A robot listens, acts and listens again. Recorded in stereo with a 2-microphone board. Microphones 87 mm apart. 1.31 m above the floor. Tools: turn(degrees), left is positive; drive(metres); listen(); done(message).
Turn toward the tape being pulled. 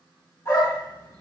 listen()
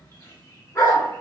listen()
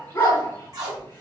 turn(degrees=-45)
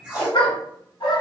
turn(degrees=-10)
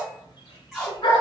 done("Facing the tape being pulled, 1 to 2 m away.")